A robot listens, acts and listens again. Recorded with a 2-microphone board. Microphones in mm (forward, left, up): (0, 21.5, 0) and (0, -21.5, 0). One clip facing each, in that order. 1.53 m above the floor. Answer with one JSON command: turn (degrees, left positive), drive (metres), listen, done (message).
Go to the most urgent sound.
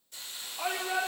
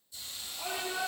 {"turn": 45}
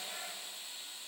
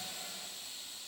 {"listen": true}
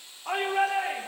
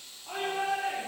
{"turn": 90}
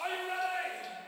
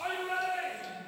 {"drive": 1.0}
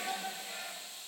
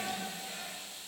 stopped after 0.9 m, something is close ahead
{"turn": 10}
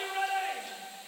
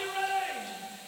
{"done": "Blocked. The shout is further on, straight ahead."}